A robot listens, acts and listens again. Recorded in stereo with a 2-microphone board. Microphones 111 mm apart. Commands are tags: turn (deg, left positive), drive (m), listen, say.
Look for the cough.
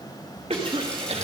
<turn deg="-65"/>
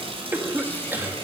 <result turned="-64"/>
<turn deg="-20"/>
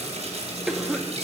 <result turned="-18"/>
<say>Found it: a cough, straight ahead.</say>